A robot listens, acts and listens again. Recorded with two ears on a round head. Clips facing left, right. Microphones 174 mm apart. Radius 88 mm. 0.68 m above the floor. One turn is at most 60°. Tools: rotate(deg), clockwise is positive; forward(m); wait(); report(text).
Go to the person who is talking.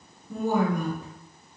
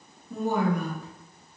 rotate(-40)
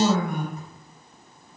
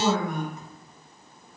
rotate(-10)
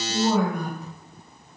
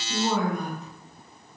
forward(1.0)
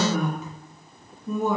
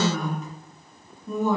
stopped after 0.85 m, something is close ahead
rotate(-10)
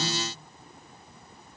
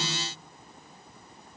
wait()
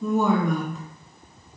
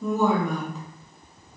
report("Arrived at the woman speaking, straight ahead.")